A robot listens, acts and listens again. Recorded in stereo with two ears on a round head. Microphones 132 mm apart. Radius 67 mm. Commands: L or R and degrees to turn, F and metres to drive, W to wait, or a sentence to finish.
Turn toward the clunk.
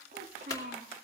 L25
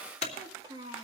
L130
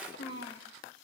Facing where the clunk came from. I can't hear it now.